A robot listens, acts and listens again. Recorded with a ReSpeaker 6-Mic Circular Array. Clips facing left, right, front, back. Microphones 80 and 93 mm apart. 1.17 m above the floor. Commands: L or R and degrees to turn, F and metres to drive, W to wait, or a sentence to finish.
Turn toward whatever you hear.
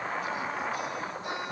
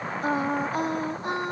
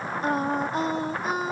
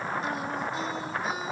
R40
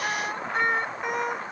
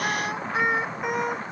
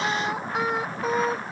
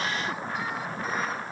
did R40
Found it: singing, straight ahead.